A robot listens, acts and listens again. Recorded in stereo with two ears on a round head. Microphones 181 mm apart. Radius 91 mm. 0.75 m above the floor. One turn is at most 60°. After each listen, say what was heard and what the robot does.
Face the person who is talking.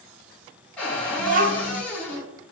The child speaking: about 40° right or 140° right. Turn 40° right.
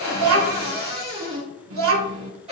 So it is at 100° right. Turn 60° right.
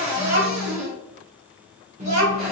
The child speaking is now 35° right. Turn 35° right.
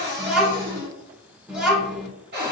Facing the child speaking.